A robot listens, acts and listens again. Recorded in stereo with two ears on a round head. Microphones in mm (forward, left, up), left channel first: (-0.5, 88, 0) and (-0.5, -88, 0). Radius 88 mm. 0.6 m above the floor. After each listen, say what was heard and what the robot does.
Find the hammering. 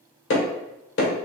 The hammering: about 60° left or 120° left. Turn 60° left.
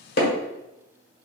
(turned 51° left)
So it is at 55° left. Turn 55° left.
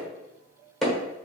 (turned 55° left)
Found it: hammering, straight ahead.